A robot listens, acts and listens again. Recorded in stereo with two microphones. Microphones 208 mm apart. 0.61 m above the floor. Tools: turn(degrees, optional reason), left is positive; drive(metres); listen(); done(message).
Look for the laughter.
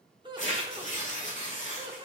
turn(degrees=-20, reason="The laughter: about 20° right or 160° right.")
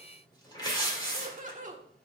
turn(degrees=-135, reason="So it is at 135° right.")
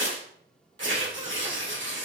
listen()
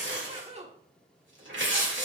turn(degrees=-35, reason="The laughter is now 35° right.")
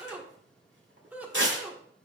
turn(degrees=-10, reason="The laughter is now 10° right.")
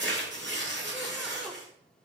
listen()
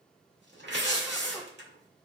listen()
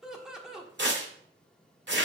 done("Facing the laughter, 1 to 2 m away.")